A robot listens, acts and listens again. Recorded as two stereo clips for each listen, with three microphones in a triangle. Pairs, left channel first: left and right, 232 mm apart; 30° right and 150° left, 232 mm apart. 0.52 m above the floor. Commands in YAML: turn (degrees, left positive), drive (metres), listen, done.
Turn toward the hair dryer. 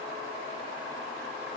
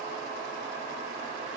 listen: true
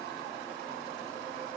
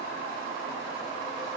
listen: true
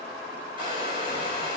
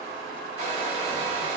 turn: -25
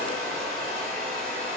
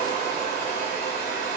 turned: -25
done: "Facing the hair dryer."